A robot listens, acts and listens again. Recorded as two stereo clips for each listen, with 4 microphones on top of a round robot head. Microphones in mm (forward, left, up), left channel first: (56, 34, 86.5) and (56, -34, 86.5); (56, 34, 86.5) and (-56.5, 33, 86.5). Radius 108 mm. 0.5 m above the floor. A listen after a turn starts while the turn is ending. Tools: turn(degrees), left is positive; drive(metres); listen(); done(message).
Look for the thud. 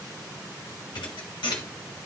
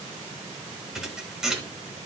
turn(degrees=95)
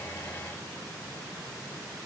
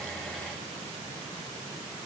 done("Facing where the thud came from. I can't hear it now.")